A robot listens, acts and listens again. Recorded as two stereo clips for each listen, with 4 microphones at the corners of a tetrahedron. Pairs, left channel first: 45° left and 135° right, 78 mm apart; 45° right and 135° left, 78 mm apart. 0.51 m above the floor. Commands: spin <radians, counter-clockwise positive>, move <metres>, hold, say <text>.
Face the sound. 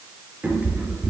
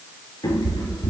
spin -1.40
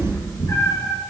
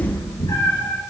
spin -0.17
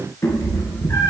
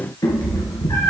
spin -0.26
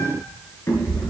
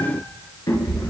spin -0.17
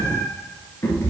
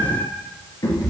spin -0.17
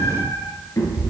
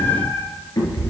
say Facing the cat meowing.